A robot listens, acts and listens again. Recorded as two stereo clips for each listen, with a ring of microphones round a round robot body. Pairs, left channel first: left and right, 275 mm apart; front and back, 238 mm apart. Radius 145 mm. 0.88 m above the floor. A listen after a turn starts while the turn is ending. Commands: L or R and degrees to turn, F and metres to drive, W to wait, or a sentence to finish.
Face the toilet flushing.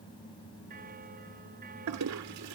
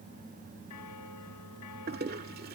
R120
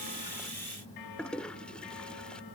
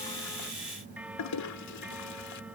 Found it: a toilet flushing, straight ahead.